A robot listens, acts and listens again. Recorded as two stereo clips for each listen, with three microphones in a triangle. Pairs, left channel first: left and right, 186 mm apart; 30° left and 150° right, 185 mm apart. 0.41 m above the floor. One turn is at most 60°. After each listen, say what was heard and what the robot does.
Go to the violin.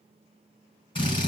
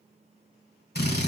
Keep listening.
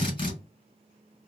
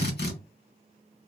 Keep listening.
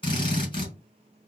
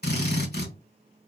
I can't make out a violin to turn to.